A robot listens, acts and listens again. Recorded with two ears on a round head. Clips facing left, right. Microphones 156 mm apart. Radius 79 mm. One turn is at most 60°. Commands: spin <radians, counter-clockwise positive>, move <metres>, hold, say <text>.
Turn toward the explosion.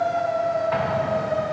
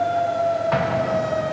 spin -0.96
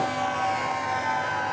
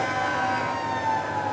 hold
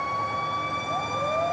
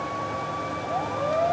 say I heard an explosion, but can't make it out now. It was about straight ahead or 70° right.